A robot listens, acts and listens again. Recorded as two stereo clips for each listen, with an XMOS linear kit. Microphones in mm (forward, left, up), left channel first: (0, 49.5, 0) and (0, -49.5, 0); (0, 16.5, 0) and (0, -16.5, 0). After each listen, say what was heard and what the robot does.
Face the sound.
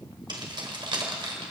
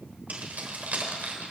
The keys jangling: about 60° right or 120° right. Turn 60° right.
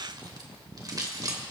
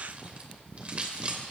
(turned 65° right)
So it is at 40° right. Turn 40° right.
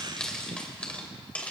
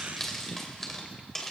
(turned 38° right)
The keys jangling is now 15° left. Turn 15° left.
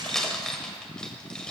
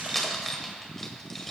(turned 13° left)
The keys jangling is now 10° left. Turn 10° left.
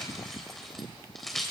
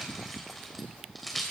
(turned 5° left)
Facing the keys jangling, 2 to 4 m away.